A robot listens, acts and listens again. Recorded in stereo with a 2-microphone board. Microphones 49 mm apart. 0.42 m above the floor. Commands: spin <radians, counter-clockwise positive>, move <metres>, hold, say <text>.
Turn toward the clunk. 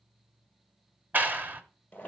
hold
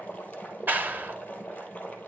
hold
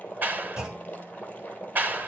spin -0.26
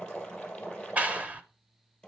hold
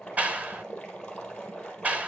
say I heard a clunk, but can't make it out now. It was about straight ahead or 150° right.